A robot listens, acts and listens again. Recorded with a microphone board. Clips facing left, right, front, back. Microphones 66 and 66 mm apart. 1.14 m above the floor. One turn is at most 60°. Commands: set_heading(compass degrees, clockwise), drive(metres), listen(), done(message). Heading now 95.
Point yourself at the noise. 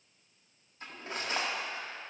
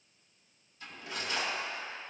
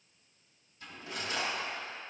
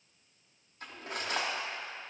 set_heading(35)
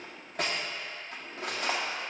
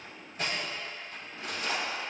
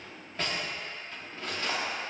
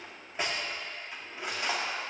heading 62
set_heading(2)
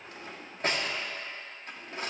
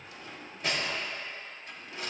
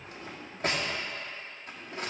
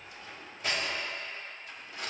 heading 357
set_heading(312)
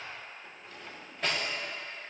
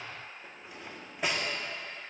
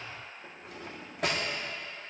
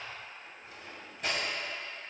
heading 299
set_heading(314)
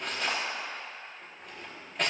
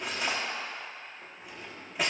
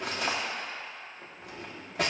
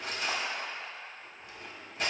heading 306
done("Facing the cutlery clinking, 1 to 2 m away.")